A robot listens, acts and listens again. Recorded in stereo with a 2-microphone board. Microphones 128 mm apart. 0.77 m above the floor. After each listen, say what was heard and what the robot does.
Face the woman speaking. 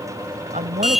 The woman speaking: about 75° right or 105° right. Turn 75° right.
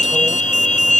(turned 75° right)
Keep listening.
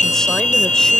Keep listening.
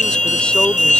I heard a woman speaking, but can't make it out now. It was about straight ahead or 30° right.